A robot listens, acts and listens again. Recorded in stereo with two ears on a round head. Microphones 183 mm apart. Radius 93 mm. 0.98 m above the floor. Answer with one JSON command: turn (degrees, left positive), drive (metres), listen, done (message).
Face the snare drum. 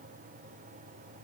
{"listen": true}
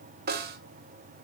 {"turn": -45}
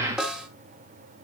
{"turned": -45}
{"done": "Facing the snare drum."}